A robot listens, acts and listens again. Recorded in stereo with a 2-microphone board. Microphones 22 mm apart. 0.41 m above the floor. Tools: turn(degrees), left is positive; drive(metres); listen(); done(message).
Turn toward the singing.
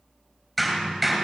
listen()
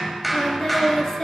turn(degrees=20)
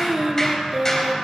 turn(degrees=-10)
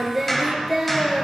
turn(degrees=-10)
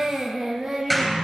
turn(degrees=-10)
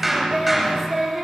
done("Facing the singing, 2 to 4 m away.")